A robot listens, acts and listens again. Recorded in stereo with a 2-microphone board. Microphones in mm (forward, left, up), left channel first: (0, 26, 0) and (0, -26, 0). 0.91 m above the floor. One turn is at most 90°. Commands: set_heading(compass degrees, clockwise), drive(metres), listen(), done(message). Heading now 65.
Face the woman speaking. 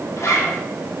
listen()
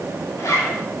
listen()
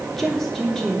set_heading(35)
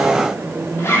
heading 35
set_heading(45)
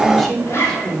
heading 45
set_heading(35)
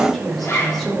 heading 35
done("Facing the woman speaking.")